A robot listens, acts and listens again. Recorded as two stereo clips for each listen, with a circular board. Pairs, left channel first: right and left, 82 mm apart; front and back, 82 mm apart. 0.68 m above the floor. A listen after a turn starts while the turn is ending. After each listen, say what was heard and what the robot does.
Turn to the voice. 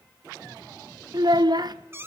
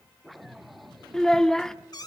The child speaking: 80° left. Turn 80° left.
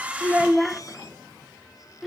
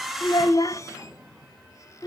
Facing the child speaking.